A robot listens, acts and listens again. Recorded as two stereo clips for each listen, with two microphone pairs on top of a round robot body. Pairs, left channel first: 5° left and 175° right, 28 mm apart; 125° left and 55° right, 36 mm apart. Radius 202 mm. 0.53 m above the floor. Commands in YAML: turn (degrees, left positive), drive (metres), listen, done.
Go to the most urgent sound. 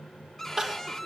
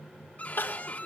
turn: 120
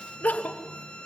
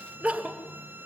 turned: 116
drive: 1.0
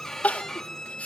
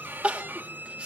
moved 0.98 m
drive: 1.0
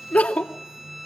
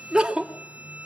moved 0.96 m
turn: 10
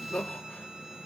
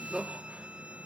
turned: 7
drive: 1.0
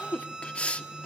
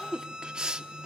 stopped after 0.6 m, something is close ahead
turn: 10
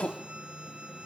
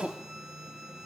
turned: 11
done: "Arrived at the crying, straight ahead."